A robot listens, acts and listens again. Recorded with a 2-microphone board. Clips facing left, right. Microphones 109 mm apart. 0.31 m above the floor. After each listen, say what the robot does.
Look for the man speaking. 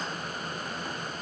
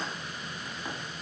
Keep listening.
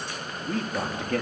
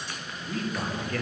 Turn 70° left.
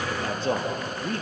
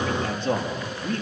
Turn 40° left.
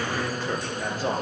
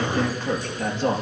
Facing the man speaking.